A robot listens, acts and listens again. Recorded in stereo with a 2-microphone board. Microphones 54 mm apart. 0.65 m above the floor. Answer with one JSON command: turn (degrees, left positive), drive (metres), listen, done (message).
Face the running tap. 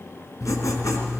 {"listen": true}
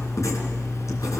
{"listen": true}
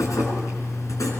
{"done": "I can't make out a running tap to turn to."}